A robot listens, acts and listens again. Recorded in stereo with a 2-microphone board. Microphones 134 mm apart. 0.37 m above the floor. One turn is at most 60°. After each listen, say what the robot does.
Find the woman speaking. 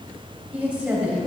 Turn 30° right.
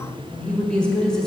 Found it: a woman speaking, straight ahead.